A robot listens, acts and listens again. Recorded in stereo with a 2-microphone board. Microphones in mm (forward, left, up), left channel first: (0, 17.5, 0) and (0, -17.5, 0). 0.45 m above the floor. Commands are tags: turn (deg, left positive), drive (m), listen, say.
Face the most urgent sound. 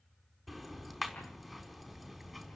<listen/>
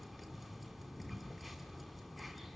<listen/>
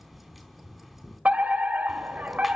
<turn deg="-55"/>
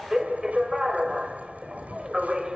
<turn deg="-20"/>
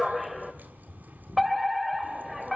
<say>Facing the fire alarm.</say>